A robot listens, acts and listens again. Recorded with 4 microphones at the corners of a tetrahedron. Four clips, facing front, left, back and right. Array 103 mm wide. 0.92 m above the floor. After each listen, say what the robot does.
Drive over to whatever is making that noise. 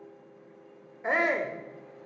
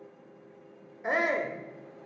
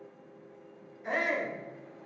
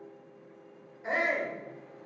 Turn 30° left.
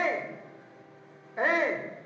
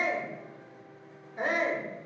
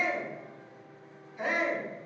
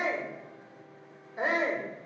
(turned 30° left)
Turn 10° right.
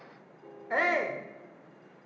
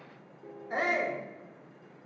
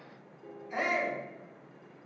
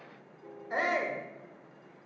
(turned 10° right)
Drive 1.0 m forward.
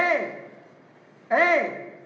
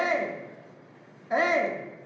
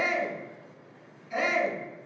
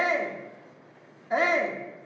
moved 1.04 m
Drive 1.0 m forward.
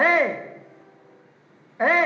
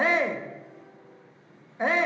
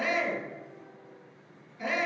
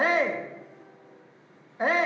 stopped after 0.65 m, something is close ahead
Arrived at the shout, straight ahead.